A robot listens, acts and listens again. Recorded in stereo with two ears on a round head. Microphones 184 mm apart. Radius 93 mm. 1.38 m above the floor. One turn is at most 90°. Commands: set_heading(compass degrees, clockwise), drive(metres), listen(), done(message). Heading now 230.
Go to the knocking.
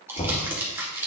set_heading(200)
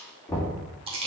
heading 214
set_heading(199)
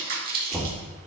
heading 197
drive(1.0)
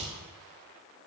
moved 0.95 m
listen()
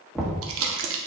drive(1.0)
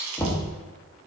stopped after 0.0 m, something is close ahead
set_heading(187)
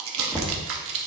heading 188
done("I am next to the knocking.")